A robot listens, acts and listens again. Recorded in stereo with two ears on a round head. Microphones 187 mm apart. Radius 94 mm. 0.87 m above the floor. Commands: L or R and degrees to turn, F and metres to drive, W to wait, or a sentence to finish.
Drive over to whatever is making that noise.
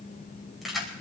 L30
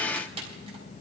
R30
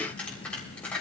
F1.0
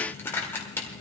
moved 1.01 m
L10
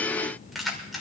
F1.0
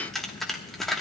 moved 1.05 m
F1.0
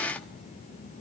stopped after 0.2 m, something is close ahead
W
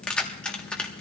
I am next to the keys jangling.